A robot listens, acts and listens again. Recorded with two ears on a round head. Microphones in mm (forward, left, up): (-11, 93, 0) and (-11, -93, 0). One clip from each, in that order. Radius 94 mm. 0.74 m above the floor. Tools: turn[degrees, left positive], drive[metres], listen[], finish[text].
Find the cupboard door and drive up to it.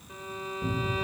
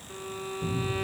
Thought: The cupboard door: about 45° right or 135° right.
Action: turn[-45]
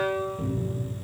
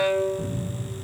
Action: drive[1.0]
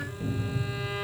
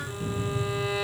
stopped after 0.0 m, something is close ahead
Thought: The cupboard door is now 10° right.
Action: turn[-10]
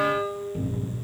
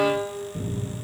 Action: finish[Something is in my way. I am facing the cupboard door but have not reached it.]